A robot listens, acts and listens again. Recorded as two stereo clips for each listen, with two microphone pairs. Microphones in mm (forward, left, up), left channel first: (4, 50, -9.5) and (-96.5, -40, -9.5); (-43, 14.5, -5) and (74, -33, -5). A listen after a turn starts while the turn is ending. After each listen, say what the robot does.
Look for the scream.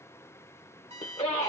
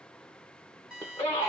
Turn 85° left.
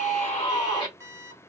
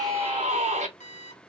Turn 15° right.
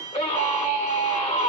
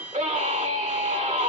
Found it: a scream, straight ahead.